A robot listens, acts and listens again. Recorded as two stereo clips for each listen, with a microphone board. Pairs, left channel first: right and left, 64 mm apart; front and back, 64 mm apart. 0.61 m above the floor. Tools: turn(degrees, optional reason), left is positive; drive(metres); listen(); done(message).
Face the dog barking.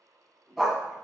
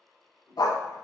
done("Found it: a dog barking, straight ahead.")